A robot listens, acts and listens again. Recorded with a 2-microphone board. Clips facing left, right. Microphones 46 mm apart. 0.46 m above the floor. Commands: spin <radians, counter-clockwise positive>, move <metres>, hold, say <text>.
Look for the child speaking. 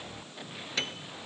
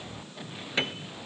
hold
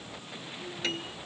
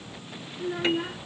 spin -1.13
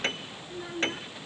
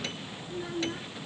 say Found it: a child speaking, straight ahead.